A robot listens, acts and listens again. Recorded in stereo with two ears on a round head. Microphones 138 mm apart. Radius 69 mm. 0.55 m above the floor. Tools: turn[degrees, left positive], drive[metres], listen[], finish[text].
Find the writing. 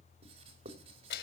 Thought: The writing: about 40° right or 140° right.
Action: turn[-40]
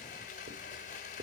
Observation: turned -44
Thought: So it is at 90° right.
Action: turn[-90]
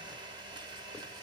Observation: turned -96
Action: listen[]
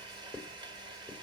Action: finish[Facing the writing.]